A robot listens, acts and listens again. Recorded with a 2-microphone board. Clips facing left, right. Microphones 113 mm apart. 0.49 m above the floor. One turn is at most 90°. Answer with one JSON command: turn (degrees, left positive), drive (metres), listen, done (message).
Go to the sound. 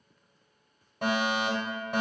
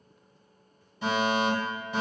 {"turn": 60}
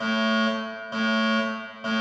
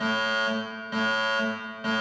{"turn": 35}
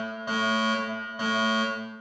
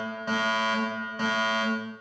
{"turn": 15}
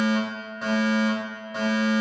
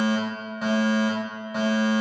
{"drive": 1.0}
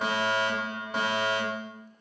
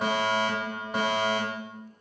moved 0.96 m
{"drive": 1.0}
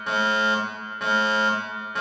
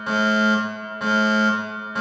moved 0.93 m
{"drive": 1.0}
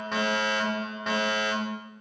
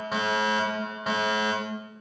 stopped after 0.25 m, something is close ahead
{"turn": -10}
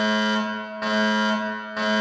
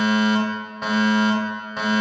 {"done": "Arrived at the fire alarm, straight ahead."}